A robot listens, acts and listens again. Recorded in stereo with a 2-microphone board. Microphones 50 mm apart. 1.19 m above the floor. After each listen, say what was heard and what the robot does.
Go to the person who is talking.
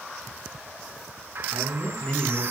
The man speaking: about 35° left or 145° left. Turn 35° left.
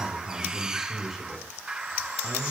Drive 1.0 m forward.
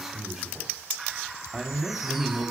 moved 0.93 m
The man speaking is now 10° right. Turn 10° right.
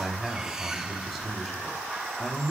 Drive 1.0 m forward.
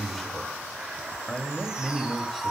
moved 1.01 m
The man speaking is now 10° left. Turn 10° left.
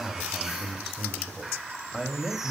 Drive 1.0 m forward.
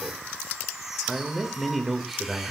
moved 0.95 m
Drive 1.0 m forward.
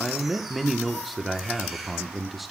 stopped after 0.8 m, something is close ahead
Arrived at the man speaking, straight ahead.